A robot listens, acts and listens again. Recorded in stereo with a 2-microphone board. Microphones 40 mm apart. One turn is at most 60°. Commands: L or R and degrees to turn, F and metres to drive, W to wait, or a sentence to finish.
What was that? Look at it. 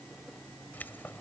L50
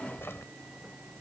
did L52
L60
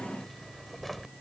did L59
Facing the keys jangling.